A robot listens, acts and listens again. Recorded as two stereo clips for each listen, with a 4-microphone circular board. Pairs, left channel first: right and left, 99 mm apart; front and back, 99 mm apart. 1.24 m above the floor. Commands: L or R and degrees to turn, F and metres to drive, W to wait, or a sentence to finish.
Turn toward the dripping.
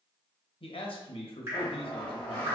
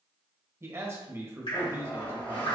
L25
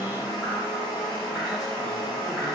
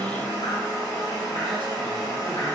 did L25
W
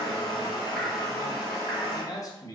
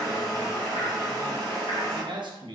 W
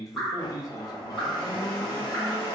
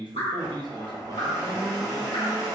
Found it: dripping, straight ahead, 1 to 2 m away.